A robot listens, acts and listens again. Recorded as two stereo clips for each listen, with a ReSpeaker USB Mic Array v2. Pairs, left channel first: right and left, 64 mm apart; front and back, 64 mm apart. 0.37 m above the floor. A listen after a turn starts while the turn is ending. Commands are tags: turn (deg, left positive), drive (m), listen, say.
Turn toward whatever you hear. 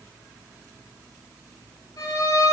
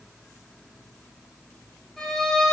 <turn deg="-85"/>
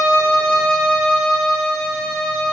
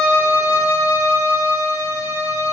<turn deg="-15"/>
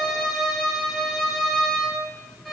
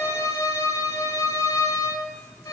<say>Facing the violin.</say>